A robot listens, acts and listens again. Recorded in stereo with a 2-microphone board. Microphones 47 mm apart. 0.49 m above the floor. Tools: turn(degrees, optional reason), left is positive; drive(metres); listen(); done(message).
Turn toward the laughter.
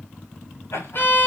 turn(degrees=70, reason="The laughter: about 70° left or 110° left.")
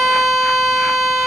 listen()
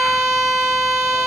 listen()
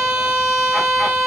done("I heard laughter, but can't make it out now. It was about straight ahead or 40° left.")